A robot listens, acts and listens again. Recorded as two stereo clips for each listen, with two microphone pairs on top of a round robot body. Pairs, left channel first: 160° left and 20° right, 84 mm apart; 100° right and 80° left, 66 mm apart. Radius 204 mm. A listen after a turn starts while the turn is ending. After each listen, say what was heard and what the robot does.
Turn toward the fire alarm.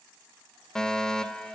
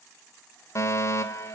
The fire alarm: 120° right. Turn 120° right.
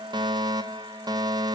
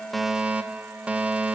Found it: a fire alarm, straight ahead.